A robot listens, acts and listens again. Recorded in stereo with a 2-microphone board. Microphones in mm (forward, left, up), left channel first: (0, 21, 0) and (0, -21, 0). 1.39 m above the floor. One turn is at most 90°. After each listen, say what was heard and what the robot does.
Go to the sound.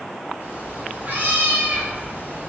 The cat meowing: about 60° right or 120° right. Turn 60° right.
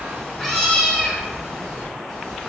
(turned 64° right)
So it is at 10° right. Turn 10° right.
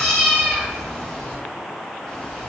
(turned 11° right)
Drive 1.0 m forward.
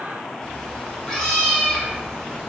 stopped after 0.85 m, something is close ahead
The cat meowing is now 10° left. Turn 10° left.
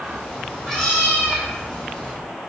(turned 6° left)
Arrived at the cat meowing, straight ahead.